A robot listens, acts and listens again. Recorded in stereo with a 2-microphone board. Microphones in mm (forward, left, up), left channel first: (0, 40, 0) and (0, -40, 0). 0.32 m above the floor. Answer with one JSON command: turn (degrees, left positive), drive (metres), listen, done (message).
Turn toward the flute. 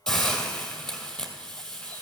{"listen": true}
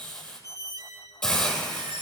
{"listen": true}
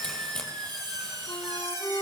{"turn": 60}
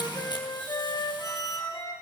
{"turn": 55}
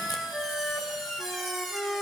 {"done": "Found it: a flute, straight ahead, 1 to 2 m away."}